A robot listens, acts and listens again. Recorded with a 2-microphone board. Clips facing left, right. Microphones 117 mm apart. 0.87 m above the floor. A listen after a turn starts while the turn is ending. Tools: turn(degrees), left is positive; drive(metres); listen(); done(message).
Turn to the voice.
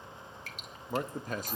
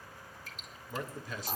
turn(degrees=50)
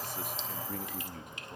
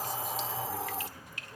turn(degrees=70)
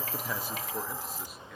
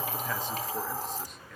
listen()
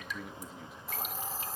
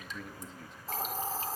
done("Facing the man speaking, 1 to 2 m away.")